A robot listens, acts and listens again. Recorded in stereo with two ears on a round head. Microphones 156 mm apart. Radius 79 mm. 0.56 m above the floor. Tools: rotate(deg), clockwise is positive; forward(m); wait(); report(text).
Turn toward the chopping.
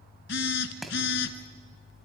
rotate(-30)
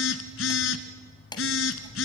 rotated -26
rotate(-155)
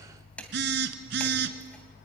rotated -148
rotate(-10)
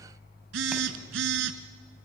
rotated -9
wait()
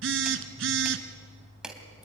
report("Found it: chopping, straight ahead.")